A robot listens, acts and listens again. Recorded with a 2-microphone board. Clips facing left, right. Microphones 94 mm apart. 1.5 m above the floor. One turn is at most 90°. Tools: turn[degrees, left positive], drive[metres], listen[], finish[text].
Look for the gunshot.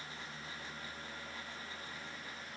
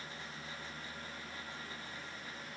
Action: listen[]
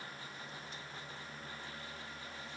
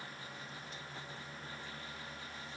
Action: listen[]
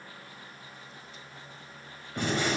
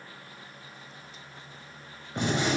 Thought: The gunshot: about 20° right or 160° right.
Action: turn[-20]
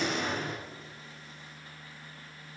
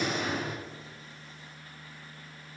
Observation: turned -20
Action: finish[Facing the gunshot.]